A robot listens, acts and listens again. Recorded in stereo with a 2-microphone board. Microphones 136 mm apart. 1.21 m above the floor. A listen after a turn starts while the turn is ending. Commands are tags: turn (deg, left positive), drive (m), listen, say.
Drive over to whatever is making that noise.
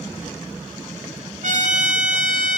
<turn deg="-90"/>
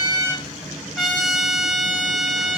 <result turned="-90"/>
<drive m="1.0"/>
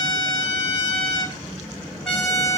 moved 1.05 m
<drive m="1.0"/>
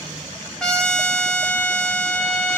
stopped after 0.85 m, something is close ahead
<say>Arrived at the trumpet, straight ahead.</say>